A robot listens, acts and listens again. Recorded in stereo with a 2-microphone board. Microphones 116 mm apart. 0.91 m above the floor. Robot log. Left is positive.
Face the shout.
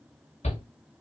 note: The shout: about 70° left or 110° left.
cmd yaw +70
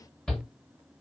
end: Found it: a shout, straight ahead.